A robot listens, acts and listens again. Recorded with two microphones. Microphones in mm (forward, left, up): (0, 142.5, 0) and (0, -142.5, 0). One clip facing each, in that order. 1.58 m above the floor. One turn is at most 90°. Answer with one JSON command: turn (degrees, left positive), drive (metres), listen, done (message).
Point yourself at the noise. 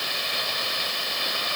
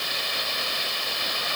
{"listen": true}
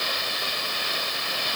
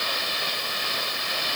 {"listen": true}
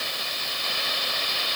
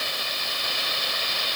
{"done": "I can't make out anything."}